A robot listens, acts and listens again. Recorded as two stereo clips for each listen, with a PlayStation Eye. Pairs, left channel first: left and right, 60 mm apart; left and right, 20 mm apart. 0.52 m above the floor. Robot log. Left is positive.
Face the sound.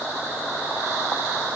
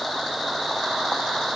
cmd idle
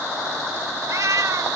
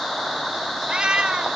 note: The cat meowing: about 65° right or 115° right.
cmd yaw -65
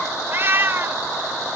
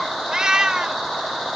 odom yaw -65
note: So it is at 40° right.
cmd yaw -40
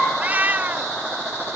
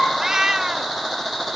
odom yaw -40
note: The cat meowing is now 30° right.
cmd yaw -30
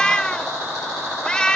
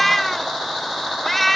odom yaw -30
note: The cat meowing is now 15° left.
cmd yaw +15
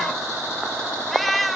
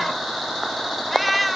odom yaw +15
end: Facing the cat meowing.